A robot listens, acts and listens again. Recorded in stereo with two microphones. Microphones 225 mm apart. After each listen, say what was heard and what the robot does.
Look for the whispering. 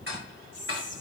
The whispering: about 40° left or 140° left. Turn 40° left.
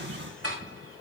Keep listening.
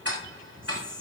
Facing the whispering, 2 to 4 m away.